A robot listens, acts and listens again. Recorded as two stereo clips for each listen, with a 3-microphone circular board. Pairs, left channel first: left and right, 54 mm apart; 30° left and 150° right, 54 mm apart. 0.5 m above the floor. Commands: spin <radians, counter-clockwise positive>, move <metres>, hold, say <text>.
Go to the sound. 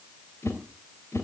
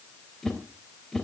spin 1.92
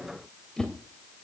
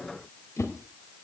spin 0.17
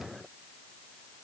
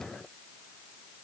hold
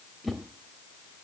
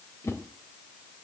move 1.0
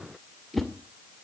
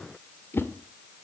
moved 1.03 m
move 1.0
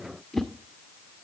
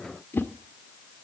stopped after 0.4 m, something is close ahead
say Arrived at the whoosh, straight ahead.